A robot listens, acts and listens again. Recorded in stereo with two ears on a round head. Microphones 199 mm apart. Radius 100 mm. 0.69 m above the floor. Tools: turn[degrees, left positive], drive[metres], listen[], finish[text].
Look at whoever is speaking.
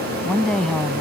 Action: turn[30]
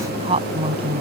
Thought: So it is at 25° right.
Action: turn[-25]
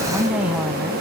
Action: finish[Found it: a woman speaking, straight ahead.]